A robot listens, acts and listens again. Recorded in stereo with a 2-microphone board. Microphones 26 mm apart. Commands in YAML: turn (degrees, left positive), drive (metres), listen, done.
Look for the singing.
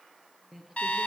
turn: -30
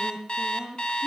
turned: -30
turn: -135
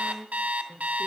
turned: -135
turn: 15
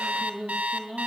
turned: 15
turn: 10
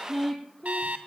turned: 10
turn: 10
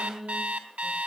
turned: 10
done: "Found it: singing, straight ahead, 2 to 4 m away."